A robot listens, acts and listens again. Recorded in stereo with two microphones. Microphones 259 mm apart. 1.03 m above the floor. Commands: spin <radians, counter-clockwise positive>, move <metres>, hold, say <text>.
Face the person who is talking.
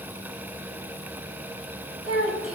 spin 0.96
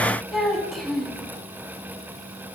say Found it: a child speaking, straight ahead.